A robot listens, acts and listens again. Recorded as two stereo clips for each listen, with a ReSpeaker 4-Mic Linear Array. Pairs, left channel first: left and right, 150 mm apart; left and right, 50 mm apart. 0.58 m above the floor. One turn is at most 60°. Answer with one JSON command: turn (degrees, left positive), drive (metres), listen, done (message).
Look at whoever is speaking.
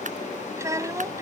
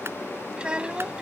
{"turn": -20}
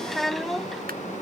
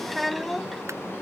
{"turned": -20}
{"done": "Facing the child speaking."}